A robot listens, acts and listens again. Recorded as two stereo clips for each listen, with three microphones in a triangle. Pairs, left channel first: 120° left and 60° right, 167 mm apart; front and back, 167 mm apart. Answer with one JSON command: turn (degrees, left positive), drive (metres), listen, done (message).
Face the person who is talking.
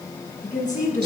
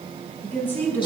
{"turn": 80}
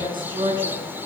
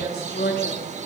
{"done": "Facing the woman speaking, over 4 m away."}